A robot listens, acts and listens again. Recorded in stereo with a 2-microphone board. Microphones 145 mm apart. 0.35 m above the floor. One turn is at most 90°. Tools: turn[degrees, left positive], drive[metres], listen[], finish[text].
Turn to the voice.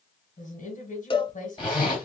Thought: The woman speaking: about 60° left or 120° left.
Action: turn[60]
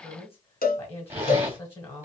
Thought: So it is at 20° left.
Action: turn[20]
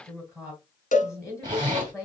Action: finish[Found it: a woman speaking, straight ahead.]